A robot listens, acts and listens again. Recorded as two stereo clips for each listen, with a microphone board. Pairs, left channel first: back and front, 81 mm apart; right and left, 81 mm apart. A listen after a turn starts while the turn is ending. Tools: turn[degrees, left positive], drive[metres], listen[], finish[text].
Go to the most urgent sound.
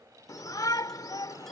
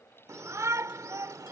Thought: The shout: 140° left.
Action: turn[140]
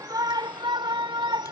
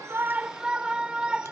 Thought: The shout is now 10° left.
Action: turn[10]
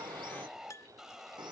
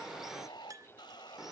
Action: drive[1.0]
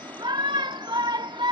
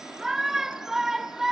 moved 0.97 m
Action: drive[1.0]
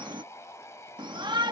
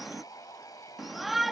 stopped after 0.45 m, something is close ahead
Action: finish[Arrived at the shout, straight ahead.]